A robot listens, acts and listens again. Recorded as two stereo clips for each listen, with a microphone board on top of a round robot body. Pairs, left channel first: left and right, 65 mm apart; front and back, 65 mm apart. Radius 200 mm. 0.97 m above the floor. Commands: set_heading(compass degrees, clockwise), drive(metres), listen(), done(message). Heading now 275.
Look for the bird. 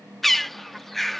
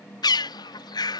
done("Found it: a bird, straight ahead.")